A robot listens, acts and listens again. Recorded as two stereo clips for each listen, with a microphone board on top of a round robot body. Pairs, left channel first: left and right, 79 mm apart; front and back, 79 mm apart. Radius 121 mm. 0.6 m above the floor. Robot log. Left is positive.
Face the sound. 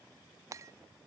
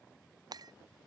note: The breaking glass: 140° right.
cmd yaw -140
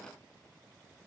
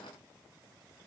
end: Facing where the breaking glass came from. I can't hear it now.